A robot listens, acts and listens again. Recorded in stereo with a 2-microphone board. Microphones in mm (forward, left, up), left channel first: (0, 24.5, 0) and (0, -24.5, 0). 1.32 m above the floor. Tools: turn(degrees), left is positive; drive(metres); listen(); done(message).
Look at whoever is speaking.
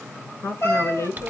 turn(degrees=75)
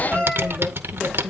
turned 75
listen()
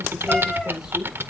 listen()
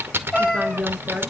done("Found it: a woman speaking, straight ahead.")